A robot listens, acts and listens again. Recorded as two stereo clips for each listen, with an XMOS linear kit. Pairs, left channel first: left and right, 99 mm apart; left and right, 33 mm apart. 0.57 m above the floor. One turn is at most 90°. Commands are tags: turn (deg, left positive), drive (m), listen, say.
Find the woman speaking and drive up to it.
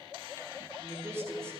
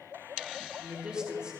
<turn deg="-30"/>
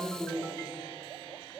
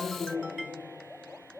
<drive m="1.0"/>
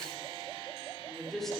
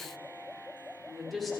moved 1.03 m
<drive m="1.0"/>
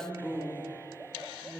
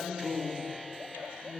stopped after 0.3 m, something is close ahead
<say>I am next to the woman speaking.</say>